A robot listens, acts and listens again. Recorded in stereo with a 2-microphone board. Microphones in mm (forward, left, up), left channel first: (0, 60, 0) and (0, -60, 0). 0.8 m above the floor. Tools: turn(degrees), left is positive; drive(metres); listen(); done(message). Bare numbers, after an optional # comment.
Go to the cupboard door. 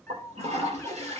listen()
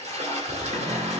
# The cupboard door: about 60° right or 120° right.
turn(-60)
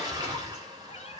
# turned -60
listen()
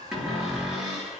drive(1.0)
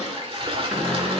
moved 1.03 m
drive(1.0)
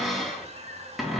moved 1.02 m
drive(1.0)
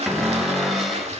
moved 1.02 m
drive(1.0)
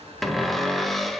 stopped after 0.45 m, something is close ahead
done("Arrived at the cupboard door, straight ahead.")